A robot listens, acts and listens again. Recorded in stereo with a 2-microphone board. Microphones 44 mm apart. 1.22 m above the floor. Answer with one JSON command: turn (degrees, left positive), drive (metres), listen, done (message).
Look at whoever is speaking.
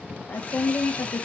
{"turn": 50}
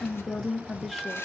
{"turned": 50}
{"done": "Found it: a woman speaking, straight ahead, 1 to 2 m away."}